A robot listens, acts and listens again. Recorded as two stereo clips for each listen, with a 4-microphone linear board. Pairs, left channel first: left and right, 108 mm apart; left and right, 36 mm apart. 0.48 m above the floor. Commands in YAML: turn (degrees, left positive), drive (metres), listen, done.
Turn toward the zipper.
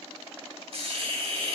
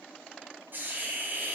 listen: true
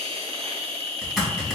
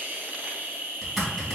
turn: 30
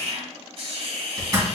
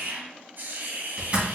turn: -35
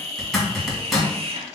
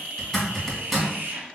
done: "Found it: a zipper, straight ahead, 1 to 2 m away."